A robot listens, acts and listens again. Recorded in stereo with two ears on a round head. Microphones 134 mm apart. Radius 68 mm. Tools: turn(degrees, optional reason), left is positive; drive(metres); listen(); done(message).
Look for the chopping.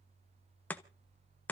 turn(degrees=30)
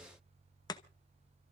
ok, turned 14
turn(degrees=155, reason="So it is at 155° left.")
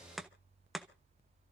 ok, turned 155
done("Facing the chopping, 1 to 2 m away.")